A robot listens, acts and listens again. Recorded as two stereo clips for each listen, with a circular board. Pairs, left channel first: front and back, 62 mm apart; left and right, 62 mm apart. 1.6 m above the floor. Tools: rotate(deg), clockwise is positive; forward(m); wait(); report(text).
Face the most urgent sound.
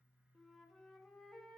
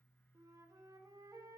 wait()
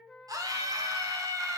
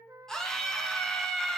rotate(-170)
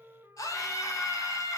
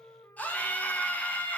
rotate(-25)
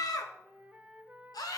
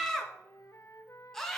report("Found it: a scream, straight ahead, 1 to 2 m away.")